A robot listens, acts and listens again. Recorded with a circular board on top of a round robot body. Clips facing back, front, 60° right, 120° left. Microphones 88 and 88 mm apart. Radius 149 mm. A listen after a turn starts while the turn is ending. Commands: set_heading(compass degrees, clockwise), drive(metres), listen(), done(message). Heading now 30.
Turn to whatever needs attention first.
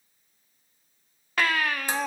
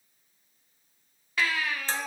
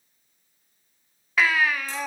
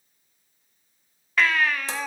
set_heading(175)
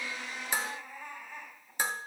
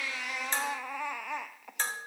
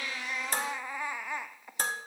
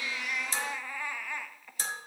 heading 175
set_heading(165)
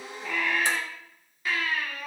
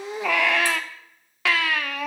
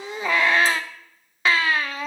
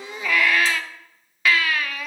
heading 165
done("Facing the baby crying.")